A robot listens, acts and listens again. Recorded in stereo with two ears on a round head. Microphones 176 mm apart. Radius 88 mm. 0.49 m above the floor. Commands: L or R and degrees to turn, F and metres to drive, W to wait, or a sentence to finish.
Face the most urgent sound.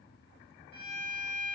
W
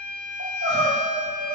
R55
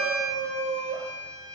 R65
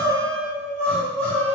Found it: crying, straight ahead.